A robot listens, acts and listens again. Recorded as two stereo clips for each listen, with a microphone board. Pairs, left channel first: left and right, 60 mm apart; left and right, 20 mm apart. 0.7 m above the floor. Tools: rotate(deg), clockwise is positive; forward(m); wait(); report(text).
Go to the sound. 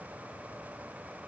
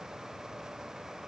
wait()
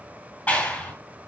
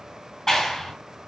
rotate(-20)
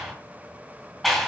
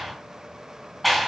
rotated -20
forward(1.0)
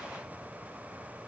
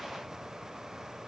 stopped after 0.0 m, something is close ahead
wait()
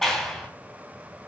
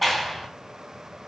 report("Blocked. The clap is further on, straight ahead.")